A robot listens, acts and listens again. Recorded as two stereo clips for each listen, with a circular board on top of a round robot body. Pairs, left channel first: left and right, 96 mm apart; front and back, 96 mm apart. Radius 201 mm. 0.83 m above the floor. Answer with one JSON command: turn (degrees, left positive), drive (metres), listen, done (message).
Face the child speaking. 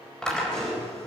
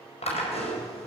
{"listen": true}
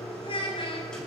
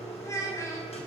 {"turn": 65}
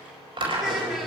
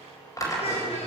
{"listen": true}
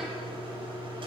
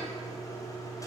{"listen": true}
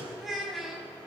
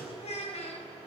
{"done": "Found it: a child speaking, straight ahead."}